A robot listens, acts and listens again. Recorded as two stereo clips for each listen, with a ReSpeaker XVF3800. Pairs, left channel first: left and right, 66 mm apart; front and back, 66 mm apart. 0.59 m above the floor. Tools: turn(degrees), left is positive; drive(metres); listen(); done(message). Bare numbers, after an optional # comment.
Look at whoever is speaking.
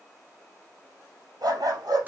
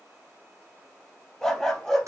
listen()
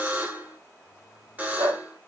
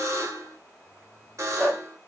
listen()
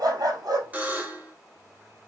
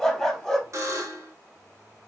done("I can't make out anyone speaking to turn to.")